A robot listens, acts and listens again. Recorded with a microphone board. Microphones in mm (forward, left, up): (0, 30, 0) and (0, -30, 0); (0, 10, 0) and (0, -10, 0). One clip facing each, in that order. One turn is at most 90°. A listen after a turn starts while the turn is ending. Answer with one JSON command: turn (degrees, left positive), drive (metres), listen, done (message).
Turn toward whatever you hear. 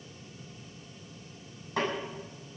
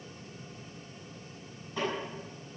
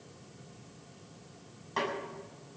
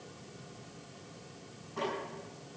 {"turn": 90}
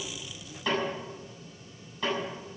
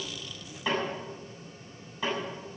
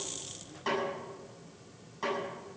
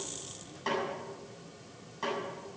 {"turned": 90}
{"done": "Found it: a snare drum, straight ahead."}